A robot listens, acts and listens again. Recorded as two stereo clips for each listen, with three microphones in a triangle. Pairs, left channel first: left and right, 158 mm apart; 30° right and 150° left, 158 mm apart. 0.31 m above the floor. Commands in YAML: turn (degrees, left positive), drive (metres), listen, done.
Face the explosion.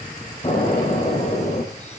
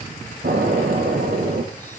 turn: 145
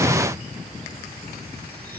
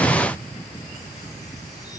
done: "I heard an explosion from this way, but can't make it out now."